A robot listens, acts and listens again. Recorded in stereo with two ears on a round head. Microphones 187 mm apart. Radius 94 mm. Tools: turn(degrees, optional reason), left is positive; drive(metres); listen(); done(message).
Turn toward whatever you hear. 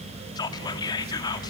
turn(degrees=20, reason="The whispering: about 20° left or 160° left.")
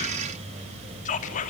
turn(degrees=140, reason="So it is at 140° left.")
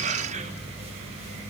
listen()
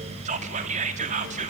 turn(degrees=-35, reason="The whispering is now 35° right.")
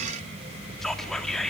done("Found it: whispering, straight ahead, 2 to 4 m away.")